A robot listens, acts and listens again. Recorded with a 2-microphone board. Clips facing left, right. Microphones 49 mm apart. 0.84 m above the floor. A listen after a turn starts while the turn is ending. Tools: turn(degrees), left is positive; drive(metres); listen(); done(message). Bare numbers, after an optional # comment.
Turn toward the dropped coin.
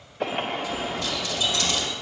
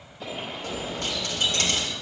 # The dropped coin: about 55° right or 125° right.
turn(-55)
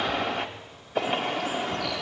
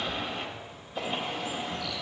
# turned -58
listen()
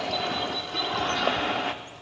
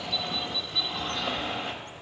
done("I heard a dropped coin, but can't make it out now. It was about straight ahead or 65° right.")